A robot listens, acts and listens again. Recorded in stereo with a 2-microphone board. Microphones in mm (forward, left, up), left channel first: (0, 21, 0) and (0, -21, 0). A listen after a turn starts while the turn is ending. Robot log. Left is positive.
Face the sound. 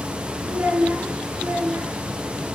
cmd yaw -90
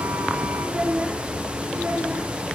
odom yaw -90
note: So it is at 30° right.
cmd yaw -30
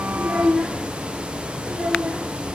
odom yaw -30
note: The child speaking is now 15° right.
cmd yaw -15
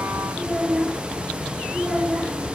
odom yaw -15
end: Found it: a child speaking, straight ahead.